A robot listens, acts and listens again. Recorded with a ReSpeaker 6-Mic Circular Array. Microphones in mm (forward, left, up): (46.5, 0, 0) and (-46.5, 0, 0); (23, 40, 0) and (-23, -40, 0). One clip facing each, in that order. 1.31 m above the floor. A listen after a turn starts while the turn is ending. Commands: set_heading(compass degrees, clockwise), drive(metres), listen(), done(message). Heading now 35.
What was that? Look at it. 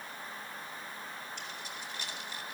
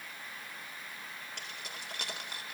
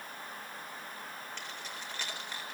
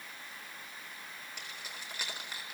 set_heading(235)
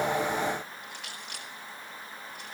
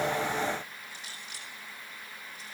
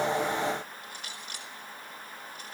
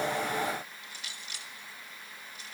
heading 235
set_heading(215)
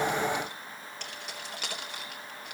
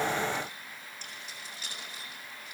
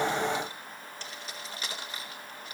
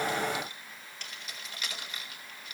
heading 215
done("Found it: keys jangling, straight ahead, 2 to 4 m away.")